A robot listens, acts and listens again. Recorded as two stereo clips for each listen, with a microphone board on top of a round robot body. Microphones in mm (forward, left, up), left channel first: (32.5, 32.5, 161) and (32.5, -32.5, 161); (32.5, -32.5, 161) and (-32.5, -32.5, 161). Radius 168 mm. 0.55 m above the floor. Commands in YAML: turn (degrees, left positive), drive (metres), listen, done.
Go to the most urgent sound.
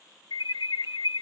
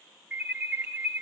turn: 110
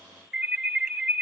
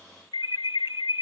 drive: 1.0
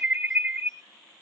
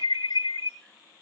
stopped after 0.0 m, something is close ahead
done: "Something is in my way. I am facing the alarm but have not reached it."